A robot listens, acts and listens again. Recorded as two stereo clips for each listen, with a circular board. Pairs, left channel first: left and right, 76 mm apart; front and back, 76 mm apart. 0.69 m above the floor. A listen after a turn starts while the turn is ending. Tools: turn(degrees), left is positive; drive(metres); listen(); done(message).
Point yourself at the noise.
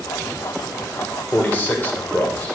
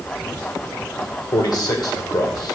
turn(degrees=20)
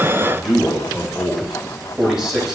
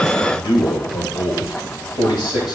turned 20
done("Facing the man speaking.")